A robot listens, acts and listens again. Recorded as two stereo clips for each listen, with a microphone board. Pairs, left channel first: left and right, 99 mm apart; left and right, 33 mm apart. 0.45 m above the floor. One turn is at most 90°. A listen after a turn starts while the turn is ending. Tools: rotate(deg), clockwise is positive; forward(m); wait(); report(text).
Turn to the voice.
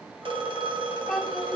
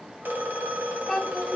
rotate(-30)
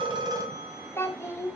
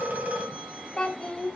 rotate(-90)
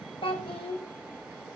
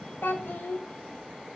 rotate(-85)
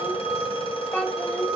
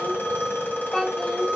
rotate(-15)
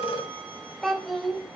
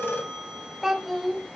report("Found it: a child speaking, straight ahead, 1 to 2 m away.")